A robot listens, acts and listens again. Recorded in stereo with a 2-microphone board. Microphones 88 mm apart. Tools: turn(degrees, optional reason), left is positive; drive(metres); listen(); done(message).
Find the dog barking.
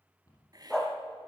turn(degrees=30)
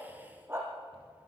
turn(degrees=-25, reason="So it is at 25° right.")
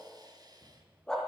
done("Facing the dog barking.")